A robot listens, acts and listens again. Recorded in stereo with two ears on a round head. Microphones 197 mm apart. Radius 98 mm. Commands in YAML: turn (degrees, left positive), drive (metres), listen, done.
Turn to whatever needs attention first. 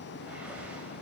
listen: true
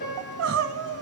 turn: -70
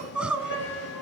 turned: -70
done: "Found it: crying, straight ahead."